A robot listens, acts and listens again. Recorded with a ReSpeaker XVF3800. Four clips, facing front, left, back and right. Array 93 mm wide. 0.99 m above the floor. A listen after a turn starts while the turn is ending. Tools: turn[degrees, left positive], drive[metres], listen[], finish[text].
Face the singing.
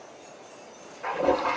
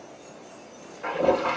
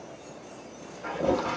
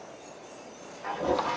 Action: listen[]
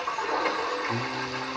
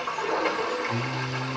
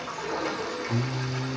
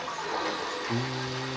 Thought: The singing: 55° right.
Action: turn[-55]
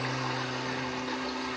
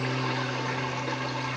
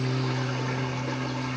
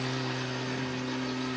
Thought: The singing is now 35° right.
Action: turn[-35]
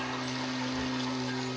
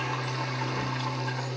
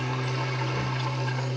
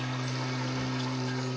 Thought: The singing is now 10° right.
Action: turn[-10]
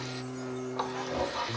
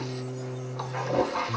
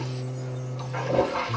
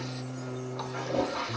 Thought: The singing is now 10° right.
Action: turn[-10]
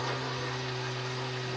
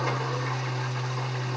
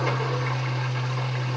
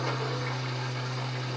Action: finish[Found it: singing, straight ahead, 2 to 4 m away.]